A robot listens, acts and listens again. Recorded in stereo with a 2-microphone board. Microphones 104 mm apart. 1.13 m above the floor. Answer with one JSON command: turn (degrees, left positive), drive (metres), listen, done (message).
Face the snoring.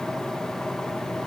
{"listen": true}
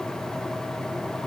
{"listen": true}
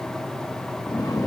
{"turn": 35}
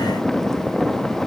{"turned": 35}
{"done": "Found it: snoring, straight ahead, 2 to 4 m away."}